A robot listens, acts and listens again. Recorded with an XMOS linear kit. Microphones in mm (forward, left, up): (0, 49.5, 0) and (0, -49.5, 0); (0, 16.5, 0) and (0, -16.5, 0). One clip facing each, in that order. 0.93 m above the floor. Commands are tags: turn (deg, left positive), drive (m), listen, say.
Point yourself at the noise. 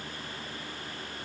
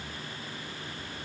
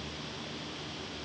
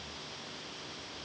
<listen/>
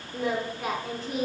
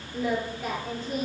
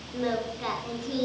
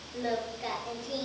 <turn deg="90"/>
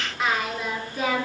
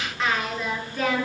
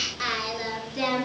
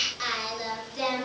<turn deg="15"/>
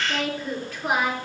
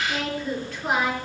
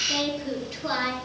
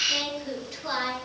<turn deg="10"/>
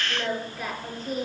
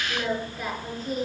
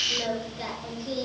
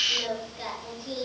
<say>Facing the singing.</say>